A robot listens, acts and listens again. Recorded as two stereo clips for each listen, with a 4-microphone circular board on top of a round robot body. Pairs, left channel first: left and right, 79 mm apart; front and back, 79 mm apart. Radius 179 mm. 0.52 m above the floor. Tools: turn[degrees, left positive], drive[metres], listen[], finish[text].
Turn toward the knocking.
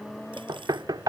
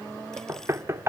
Thought: The knocking: 125° right.
Action: turn[-125]
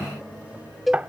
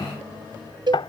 Thought: The knocking is now 15° right.
Action: turn[-15]
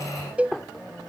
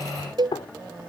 Action: finish[Facing the knocking.]